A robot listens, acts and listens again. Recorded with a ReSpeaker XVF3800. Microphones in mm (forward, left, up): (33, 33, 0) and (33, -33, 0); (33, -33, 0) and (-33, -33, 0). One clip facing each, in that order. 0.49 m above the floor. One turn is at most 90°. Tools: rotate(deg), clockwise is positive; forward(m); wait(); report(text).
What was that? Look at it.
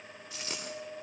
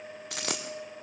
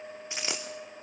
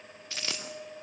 rotate(70)
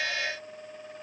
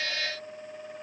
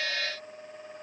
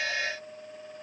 report("I heard a dropped coin from this way, but can't make it out now.")